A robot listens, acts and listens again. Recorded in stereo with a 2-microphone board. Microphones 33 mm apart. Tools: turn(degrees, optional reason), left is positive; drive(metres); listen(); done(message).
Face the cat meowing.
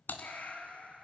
turn(degrees=50, reason="The cat meowing: about 50° left or 130° left.")
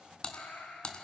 turn(degrees=85, reason="So it is at 85° left.")
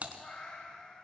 turn(degrees=20, reason="The cat meowing is now 20° left.")
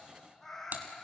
turn(degrees=10, reason="The cat meowing is now 10° left.")
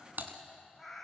done("Found it: a cat meowing, straight ahead.")